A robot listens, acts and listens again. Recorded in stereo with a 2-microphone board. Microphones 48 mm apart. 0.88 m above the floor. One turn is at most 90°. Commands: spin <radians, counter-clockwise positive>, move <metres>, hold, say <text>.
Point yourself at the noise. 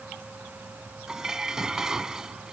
spin -0.52
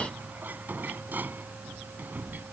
spin -1.57
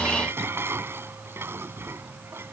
spin -1.05
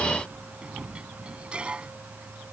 spin -0.35
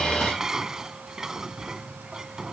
spin -0.17
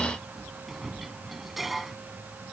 say Facing the dishes clattering.